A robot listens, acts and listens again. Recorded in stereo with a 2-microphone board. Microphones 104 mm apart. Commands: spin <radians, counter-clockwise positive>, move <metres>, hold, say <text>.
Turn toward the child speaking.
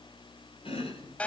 hold
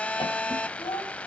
spin 0.96
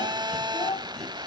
spin 1.22
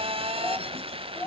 spin 0.44
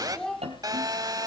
spin 0.17
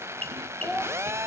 say Facing the child speaking, 2 to 4 m away.